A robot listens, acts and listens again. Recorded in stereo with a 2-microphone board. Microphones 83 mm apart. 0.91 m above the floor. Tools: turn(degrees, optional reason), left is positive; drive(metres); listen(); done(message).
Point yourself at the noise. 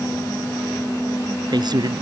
turn(degrees=-60, reason="The man speaking: about 60° right or 120° right.")
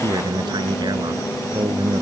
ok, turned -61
turn(degrees=-60, reason="So it is at 60° right.")
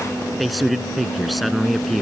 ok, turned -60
done("Facing the man speaking.")